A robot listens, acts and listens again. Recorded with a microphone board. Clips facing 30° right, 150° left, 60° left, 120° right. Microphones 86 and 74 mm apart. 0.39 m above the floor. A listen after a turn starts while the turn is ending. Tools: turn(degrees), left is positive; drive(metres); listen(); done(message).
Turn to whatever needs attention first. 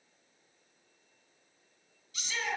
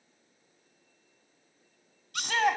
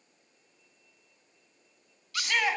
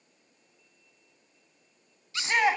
turn(degrees=175)
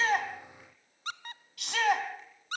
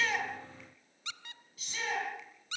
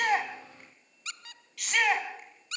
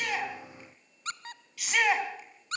turn(degrees=-35)
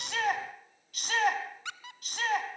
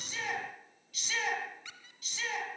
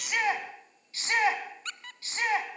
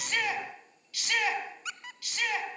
done("Facing the shout, 2 to 4 m away.")